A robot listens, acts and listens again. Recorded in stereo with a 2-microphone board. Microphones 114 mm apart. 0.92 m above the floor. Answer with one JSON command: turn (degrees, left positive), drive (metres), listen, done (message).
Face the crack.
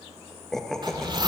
{"turn": 45}
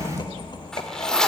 {"turn": 85}
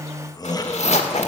{"done": "Facing where the crack came from. I can't hear it now."}